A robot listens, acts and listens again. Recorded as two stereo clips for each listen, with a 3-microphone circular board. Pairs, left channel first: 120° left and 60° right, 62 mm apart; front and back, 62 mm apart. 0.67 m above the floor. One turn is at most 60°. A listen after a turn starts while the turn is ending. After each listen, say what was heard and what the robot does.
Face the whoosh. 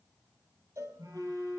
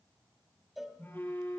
Keep listening.
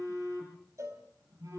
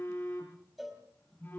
Keep listening.
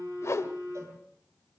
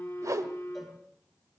The whoosh: 155° left. Turn 60° left.
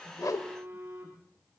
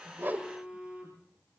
Nothing new. It was at 95° left. Turn 60° left.
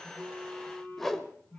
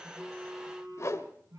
The whoosh is now 35° left. Turn 35° left.
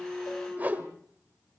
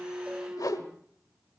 Facing the whoosh.